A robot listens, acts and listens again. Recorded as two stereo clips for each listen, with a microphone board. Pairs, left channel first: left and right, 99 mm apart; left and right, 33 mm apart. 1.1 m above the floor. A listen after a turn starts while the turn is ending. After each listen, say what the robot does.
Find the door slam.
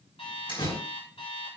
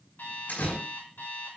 Turn 60° left.
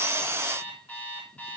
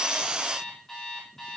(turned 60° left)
Keep listening.
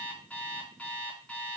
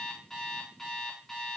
I heard a door slam, but can't make it out now. It was about straight ahead or 60° left.